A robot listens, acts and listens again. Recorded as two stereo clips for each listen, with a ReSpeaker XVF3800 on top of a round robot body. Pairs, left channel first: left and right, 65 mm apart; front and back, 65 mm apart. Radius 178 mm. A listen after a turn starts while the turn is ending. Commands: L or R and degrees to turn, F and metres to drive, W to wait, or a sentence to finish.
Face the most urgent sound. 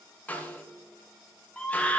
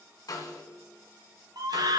L165
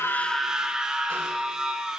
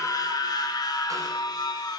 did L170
R10
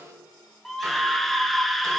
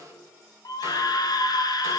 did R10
Found it: a scream, straight ahead.